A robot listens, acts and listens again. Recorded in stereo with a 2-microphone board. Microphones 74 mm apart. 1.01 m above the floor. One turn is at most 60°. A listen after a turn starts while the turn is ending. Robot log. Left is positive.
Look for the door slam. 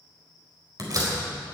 note: The door slam: about 50° right or 130° right.
cmd yaw -50
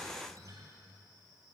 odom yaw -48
cmd idle
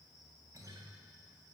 end: I heard a door slam, but can't make it out now. It was about 5° right or 80° right.